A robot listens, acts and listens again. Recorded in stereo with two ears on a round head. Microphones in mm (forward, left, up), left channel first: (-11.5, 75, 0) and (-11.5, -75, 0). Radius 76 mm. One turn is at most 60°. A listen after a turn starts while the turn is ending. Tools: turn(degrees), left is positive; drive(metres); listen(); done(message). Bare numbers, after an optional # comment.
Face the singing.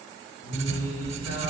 # The singing: about 65° left or 115° left.
turn(60)
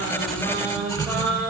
done("Found it: singing, straight ahead, 2 to 4 m away.")